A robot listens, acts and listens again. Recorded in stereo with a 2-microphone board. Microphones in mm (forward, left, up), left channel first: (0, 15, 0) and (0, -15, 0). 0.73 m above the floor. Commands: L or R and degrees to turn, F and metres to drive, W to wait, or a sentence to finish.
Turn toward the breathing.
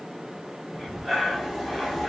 R30
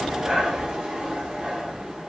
R140
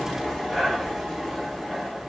Facing the breathing, 1 to 2 m away.